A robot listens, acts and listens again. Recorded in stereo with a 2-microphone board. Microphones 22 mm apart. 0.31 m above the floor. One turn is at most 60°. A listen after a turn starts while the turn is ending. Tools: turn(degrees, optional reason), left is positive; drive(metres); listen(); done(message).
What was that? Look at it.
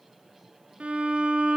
turn(degrees=-55, reason="The violin: about 55° right or 125° right.")
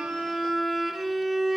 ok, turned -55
done("Facing the violin.")